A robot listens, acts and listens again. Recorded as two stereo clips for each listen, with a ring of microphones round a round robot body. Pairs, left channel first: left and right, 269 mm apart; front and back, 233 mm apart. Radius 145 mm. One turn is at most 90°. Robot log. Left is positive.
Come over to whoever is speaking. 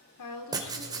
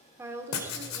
note: The woman speaking: 100° left.
cmd yaw +90
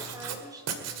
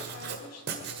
note: The woman speaking is now 15° right.
cmd yaw -15
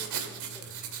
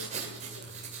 cmd idle
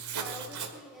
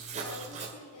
cmd fwd 1.0
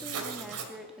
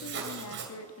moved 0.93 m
cmd fwd 1.0
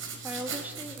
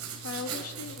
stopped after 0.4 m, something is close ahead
end: I am next to the woman speaking.